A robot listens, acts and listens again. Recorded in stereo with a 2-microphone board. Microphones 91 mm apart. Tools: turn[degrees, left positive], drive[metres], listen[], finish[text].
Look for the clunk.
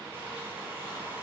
Action: listen[]
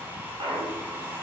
Thought: The clunk: about 60° right or 120° right.
Action: turn[-60]
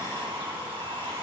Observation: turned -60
Action: listen[]
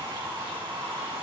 Action: finish[I heard a clunk, but can't make it out now. It was about straight ahead or 60° right.]